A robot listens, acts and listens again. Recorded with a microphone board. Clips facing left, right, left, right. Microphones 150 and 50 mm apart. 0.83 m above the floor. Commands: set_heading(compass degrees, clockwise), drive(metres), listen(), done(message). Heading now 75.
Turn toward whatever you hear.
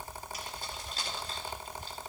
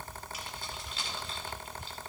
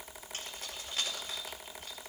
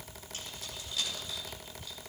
set_heading(35)
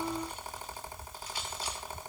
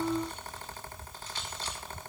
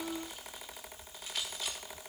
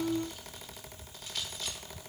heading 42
listen()
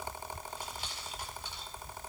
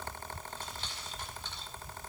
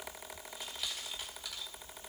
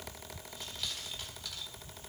listen()
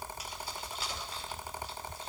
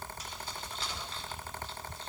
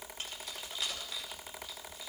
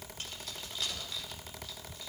set_heading(32)
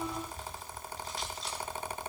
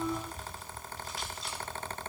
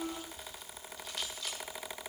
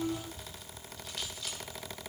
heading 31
done("Found it: keys jangling, straight ahead, 2 to 4 m away.")